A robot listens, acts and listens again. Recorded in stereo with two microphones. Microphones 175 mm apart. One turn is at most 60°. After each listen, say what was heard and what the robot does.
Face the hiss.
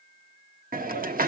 The hiss: about 55° right or 125° right. Turn 55° right.
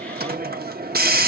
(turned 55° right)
So it is at 65° right. Turn 60° right.
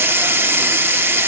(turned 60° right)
The hiss is now 15° right. Turn 15° right.
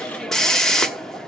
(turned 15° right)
Found it: a hiss, straight ahead.